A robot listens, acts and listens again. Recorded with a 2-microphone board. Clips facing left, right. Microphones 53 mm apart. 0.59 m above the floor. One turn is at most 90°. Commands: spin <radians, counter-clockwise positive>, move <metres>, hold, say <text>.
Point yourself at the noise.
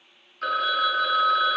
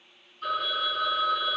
spin 1.57
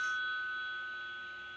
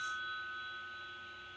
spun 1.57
say Found it: a phone ringing, straight ahead, under 1 m away.